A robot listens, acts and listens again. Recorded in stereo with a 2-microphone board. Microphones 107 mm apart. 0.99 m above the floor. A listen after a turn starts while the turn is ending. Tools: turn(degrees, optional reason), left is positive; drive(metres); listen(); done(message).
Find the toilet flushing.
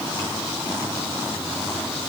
listen()
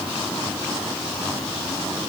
listen()
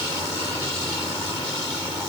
done("I can't make out a toilet flushing.")